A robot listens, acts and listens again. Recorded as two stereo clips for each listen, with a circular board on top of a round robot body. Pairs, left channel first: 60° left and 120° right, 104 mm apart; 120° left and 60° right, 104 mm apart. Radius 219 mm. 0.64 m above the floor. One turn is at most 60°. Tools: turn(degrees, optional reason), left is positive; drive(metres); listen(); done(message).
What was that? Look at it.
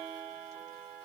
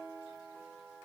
listen()
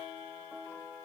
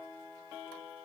listen()
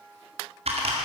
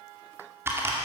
turn(degrees=-60, reason="The typing on a keyboard: 125° right.")
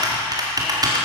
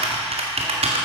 turn(degrees=-60, reason="The typing on a keyboard is now 70° right.")
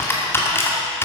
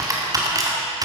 done("Facing the typing on a keyboard.")